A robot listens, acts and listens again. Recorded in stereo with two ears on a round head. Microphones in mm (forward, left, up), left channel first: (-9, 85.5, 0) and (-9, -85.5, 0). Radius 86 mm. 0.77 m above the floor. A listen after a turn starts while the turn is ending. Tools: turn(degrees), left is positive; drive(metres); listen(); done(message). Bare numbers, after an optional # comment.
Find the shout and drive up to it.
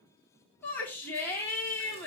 turn(30)
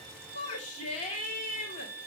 # So it is at 140° left.
turn(140)
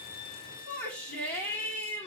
# The shout is now 10° left.
turn(10)
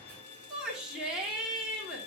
drive(1.0)
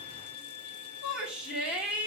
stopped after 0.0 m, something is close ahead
done("Something is in my way. I am facing the shout but have not reached it.")